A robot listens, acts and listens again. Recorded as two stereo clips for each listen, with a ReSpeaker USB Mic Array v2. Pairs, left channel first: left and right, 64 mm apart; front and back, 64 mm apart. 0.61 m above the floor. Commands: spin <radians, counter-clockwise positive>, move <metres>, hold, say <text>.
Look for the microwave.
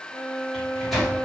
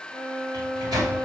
spin 3.14
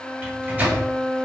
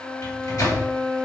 spin -0.44
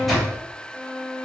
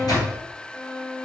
say Facing the microwave, 2 to 4 m away.